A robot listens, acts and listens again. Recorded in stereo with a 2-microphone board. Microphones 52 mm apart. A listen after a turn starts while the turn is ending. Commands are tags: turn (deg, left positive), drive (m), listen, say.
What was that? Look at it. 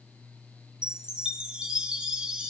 <turn deg="-20"/>
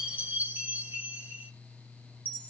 <turn deg="-140"/>
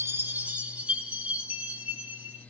<turn deg="-30"/>
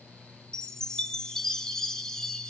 <turn deg="15"/>
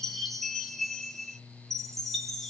<say>Found it: a chime, straight ahead, 2 to 4 m away.</say>